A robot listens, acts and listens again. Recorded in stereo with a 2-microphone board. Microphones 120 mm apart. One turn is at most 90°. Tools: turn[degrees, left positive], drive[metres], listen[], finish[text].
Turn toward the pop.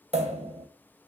Thought: The pop: about 60° right or 120° right.
Action: turn[-60]
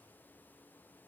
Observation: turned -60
Action: listen[]
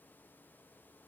Action: finish[I heard a pop, but can't make it out now. It was about straight ahead or 60° right.]